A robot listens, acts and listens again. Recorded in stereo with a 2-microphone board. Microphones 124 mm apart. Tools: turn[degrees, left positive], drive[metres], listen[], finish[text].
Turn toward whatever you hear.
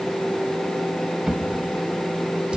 Action: turn[-30]
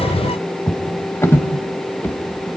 Thought: So it is at 20° left.
Action: turn[20]
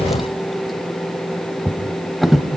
Action: finish[Found it: a drawer, straight ahead, 1 to 2 m away.]